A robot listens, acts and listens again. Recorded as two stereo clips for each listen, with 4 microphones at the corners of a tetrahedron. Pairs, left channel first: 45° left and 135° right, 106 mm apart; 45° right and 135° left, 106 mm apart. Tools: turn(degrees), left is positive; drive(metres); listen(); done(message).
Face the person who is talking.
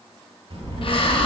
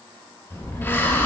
turn(degrees=-120)
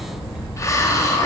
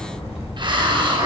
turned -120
turn(degrees=-55)
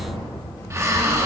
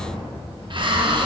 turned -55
turn(degrees=-10)
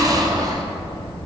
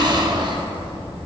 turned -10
done("Found it: a child speaking, straight ahead.")